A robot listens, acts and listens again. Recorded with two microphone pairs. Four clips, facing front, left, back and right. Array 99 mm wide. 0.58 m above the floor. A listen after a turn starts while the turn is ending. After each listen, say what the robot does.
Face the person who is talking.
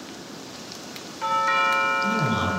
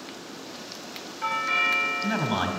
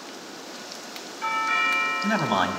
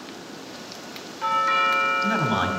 Turn 160° right.
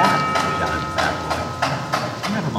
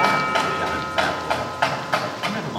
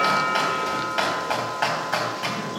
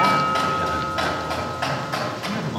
Turn 35° left.
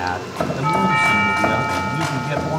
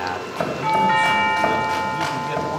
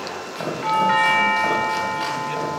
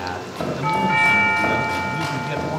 Keep listening.
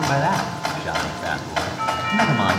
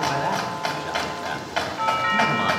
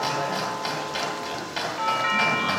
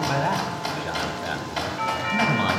Turn 10° left.
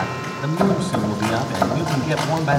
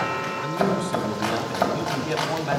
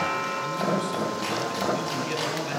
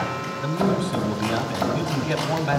Facing the man speaking, 1 to 2 m away.